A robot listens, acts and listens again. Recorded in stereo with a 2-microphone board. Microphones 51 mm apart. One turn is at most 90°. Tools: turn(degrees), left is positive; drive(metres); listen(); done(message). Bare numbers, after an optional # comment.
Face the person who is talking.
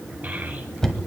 # The child speaking: about 35° right or 145° right.
turn(-35)
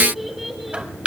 done("Found it: a child speaking, straight ahead.")